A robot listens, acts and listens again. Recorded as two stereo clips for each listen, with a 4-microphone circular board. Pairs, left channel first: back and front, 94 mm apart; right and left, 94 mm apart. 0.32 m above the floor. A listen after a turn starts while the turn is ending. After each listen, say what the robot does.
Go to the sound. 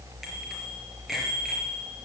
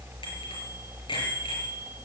Turn 90° right.
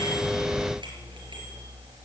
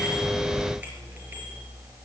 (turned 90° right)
Keep listening.
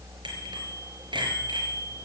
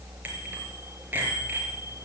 Turn 20° left.
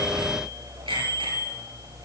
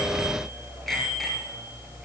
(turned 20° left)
Drive 1.0 m forward.
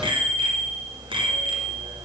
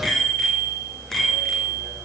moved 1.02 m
Drive 1.0 m forward.
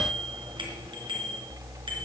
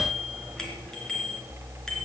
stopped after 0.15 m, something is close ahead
Blocked. The bicycle bell is further on, straight ahead.